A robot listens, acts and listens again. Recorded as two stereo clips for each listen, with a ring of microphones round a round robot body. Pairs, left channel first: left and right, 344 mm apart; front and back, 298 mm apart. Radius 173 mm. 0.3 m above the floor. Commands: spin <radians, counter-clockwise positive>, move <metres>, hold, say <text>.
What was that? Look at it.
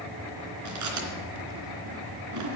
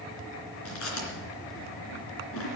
spin -0.87
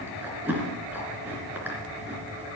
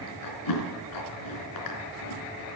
say Facing the chewing.